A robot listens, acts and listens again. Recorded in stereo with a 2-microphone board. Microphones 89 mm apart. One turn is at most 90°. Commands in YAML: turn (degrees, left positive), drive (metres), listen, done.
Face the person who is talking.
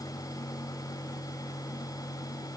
listen: true
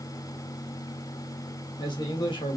turn: 60
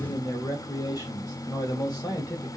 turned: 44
turn: 50
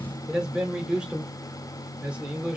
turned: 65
turn: -15
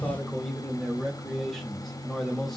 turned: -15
done: "Found it: a man speaking, straight ahead, 1 to 2 m away."